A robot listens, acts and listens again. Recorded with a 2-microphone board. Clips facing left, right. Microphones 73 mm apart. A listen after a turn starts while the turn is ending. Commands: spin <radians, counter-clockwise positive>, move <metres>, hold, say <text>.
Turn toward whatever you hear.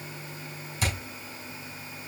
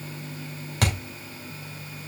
spin -1.13
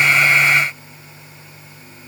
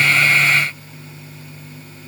hold
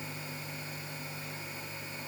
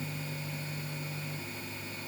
say I heard a thud, but can't make it out now. It was about straight ahead or 50° right.